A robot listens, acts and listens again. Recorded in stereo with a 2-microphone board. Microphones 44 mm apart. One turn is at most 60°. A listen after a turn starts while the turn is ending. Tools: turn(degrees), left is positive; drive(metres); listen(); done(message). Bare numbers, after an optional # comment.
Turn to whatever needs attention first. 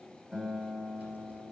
listen()
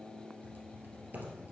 listen()
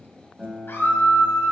# The scream: about 60° left or 120° left.
turn(60)
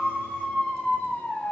# So it is at 40° left.
turn(40)
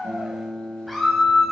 done("Facing the scream, 2 to 4 m away.")